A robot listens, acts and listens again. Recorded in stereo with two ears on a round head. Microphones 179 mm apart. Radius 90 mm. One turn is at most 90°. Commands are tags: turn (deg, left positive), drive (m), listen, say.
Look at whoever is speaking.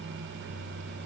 <listen/>
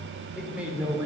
<turn deg="-30"/>
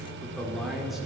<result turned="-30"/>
<turn deg="-30"/>
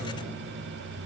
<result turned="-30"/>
<listen/>
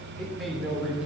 <turn deg="-30"/>
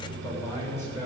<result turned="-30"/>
<turn deg="15"/>
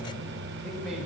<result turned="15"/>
<say>Found it: a man speaking, straight ahead.</say>